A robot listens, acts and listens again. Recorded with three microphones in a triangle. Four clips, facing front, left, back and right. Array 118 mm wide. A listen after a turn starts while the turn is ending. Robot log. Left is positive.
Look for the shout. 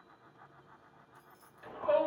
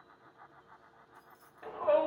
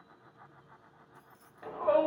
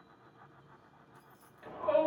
note: The shout: 150° left.
cmd yaw +150
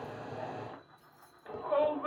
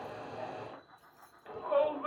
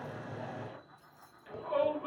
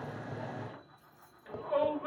note: The shout is now 40° left.
cmd yaw +40
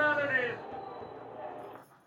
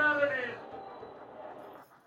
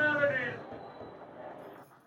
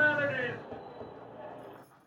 note: The shout is now 15° left.
cmd yaw +15
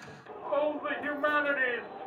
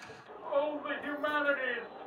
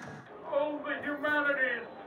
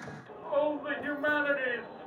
end: Found it: a shout, straight ahead.